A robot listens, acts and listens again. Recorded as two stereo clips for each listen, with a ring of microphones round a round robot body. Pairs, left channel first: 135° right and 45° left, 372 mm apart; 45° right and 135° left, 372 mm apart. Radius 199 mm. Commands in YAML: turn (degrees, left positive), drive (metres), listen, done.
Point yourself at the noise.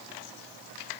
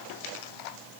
listen: true
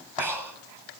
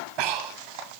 turn: 130
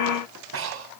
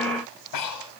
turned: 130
turn: -10
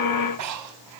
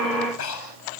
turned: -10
done: "Facing the breathing, 2 to 4 m away."